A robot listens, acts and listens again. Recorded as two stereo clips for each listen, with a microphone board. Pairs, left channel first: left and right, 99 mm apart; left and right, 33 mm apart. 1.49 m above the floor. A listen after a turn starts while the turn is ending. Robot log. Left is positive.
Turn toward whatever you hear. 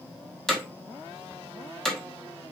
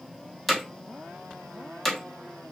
cmd yaw +30
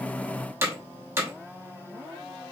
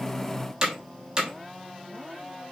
note: So it is at 25° right.
cmd yaw -25
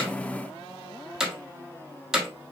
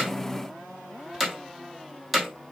end: Found it: hammering, straight ahead, 1 to 2 m away.